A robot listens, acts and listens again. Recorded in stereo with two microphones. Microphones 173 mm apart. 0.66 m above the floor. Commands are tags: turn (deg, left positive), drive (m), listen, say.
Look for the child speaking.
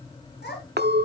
<turn deg="75"/>
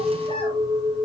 <listen/>
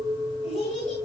<turn deg="45"/>
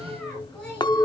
<say>Facing the child speaking.</say>